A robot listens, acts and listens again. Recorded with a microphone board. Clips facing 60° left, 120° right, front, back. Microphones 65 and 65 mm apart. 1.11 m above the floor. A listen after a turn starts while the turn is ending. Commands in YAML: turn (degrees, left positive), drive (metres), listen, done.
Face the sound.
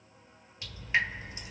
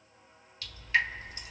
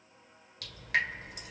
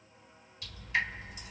turn: -10
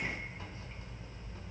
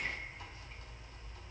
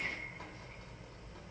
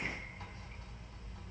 done: "Facing the dripping, 1 to 2 m away."